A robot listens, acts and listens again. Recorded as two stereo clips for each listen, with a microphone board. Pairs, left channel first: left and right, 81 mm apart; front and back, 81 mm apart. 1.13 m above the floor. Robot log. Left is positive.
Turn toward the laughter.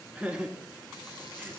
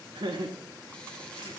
note: The laughter: 170° right.
cmd yaw -170
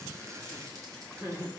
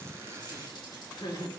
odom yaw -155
note: The laughter is now 30° right.
cmd yaw -30
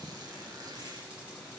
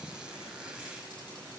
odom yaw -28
cmd idle
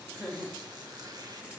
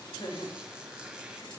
note: The laughter is now 10° right.
cmd yaw -10
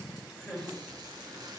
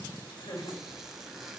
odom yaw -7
end: Found it: laughter, straight ahead, over 4 m away.